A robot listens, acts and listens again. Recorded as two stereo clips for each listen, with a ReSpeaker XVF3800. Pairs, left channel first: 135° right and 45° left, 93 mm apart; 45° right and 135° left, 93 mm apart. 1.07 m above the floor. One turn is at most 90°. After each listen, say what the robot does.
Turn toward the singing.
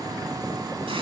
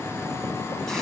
Keep listening.
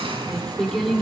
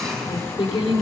Turn 50° right.
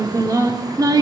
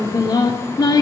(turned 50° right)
Facing the singing.